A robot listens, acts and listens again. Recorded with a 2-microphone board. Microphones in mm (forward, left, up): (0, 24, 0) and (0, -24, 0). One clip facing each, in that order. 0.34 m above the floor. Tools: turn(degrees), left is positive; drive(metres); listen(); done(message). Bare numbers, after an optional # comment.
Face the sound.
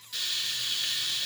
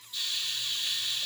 turn(90)
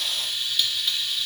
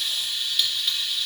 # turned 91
done("Found it: frying, straight ahead.")